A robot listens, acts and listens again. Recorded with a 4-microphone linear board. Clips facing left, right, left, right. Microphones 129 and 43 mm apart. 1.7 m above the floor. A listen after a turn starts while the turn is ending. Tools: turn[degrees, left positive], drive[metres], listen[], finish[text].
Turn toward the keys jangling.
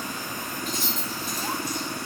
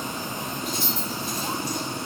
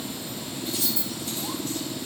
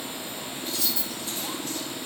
Thought: The keys jangling: about 45° left or 135° left.
Action: turn[45]
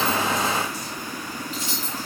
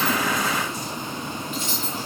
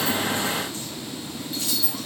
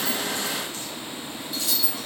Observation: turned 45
Thought: So it is at 40° left.
Action: turn[40]
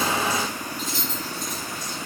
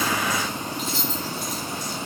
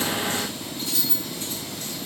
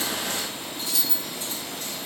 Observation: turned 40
Thought: The keys jangling is now 45° left.
Action: turn[45]
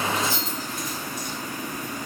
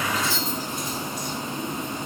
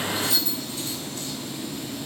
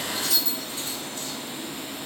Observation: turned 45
Thought: The keys jangling is now 45° left.
Action: turn[45]
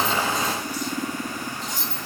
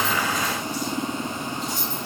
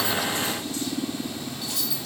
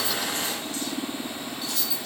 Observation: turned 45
Thought: The keys jangling is now 15° left.
Action: turn[15]
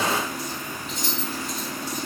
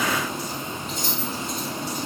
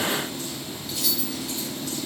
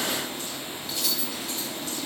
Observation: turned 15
Action: finish[Facing the keys jangling, 1 to 2 m away.]